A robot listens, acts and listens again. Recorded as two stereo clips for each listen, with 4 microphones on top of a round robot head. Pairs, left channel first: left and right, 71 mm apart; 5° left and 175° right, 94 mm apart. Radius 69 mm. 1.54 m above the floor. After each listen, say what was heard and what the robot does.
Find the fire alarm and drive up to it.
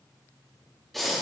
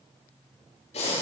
Keep listening.
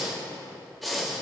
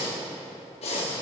Keep listening.
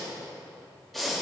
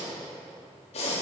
I can't make out a fire alarm, only breathing.